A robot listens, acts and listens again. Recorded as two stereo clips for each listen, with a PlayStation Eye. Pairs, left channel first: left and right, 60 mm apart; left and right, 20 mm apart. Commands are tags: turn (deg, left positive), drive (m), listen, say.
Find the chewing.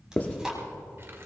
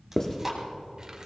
<turn deg="-30"/>
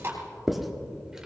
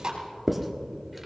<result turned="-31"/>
<turn deg="-135"/>
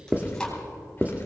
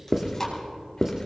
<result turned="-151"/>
<turn deg="15"/>
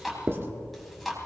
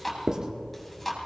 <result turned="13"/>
<say>Facing the chewing, 2 to 4 m away.</say>